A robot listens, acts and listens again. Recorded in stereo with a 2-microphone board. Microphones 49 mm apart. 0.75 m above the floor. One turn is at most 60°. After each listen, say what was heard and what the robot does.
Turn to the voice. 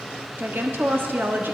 The woman speaking: about 45° right or 135° right. Turn 45° right.
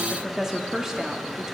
So it is at 10° right. Turn 10° right.
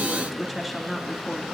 Facing the woman speaking.